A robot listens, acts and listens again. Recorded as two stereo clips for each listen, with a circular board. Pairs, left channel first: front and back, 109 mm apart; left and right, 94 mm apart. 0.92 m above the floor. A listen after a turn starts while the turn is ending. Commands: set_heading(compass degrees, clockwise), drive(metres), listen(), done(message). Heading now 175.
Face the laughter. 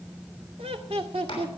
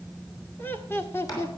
set_heading(25)
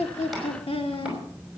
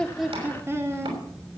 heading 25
set_heading(55)
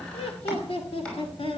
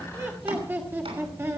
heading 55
set_heading(85)
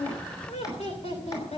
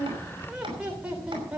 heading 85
set_heading(100)
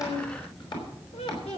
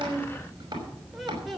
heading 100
done("Facing the laughter.")